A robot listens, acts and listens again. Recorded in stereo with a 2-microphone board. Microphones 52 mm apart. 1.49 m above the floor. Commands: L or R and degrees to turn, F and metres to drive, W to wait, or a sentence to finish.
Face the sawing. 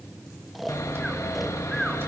L70
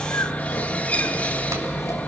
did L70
L30
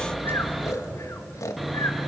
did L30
Found it: sawing, straight ahead.